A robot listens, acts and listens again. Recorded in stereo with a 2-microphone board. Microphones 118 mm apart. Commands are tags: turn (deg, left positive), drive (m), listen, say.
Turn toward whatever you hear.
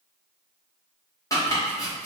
<turn deg="25"/>
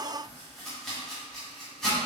<say>Found it: chopping, straight ahead.</say>